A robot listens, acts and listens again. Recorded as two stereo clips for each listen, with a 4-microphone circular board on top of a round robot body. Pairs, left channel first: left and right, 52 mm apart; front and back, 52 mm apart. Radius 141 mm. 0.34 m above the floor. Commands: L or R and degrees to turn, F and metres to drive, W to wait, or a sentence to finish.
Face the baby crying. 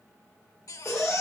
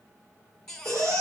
L80
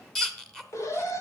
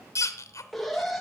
L10
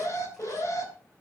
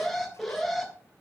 W
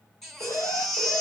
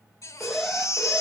Facing the baby crying.